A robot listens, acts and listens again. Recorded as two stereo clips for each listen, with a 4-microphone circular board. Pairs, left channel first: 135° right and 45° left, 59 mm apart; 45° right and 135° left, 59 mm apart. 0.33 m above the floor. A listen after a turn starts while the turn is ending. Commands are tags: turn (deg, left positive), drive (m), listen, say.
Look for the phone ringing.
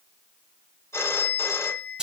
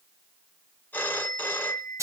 <turn deg="-100"/>
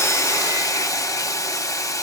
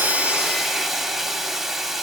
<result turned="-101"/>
<listen/>
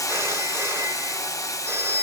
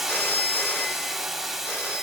<say>Facing the phone ringing, 1 to 2 m away.</say>